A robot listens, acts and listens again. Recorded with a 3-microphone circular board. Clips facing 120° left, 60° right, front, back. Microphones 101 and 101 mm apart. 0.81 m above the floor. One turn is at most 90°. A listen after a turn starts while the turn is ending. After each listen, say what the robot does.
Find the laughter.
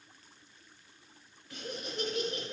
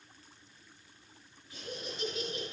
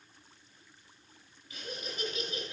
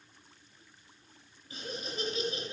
Turn 90° left.
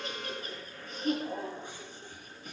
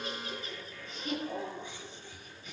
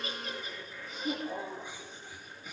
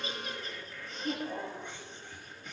Turn 85° left.
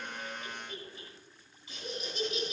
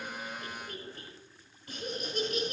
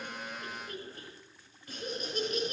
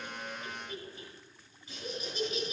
Turn 30° right.
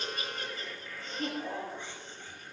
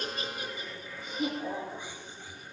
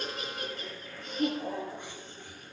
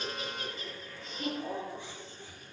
Turn 20° left.
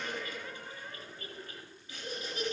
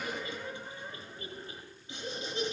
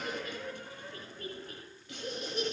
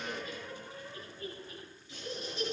Found it: laughter, straight ahead, over 4 m away.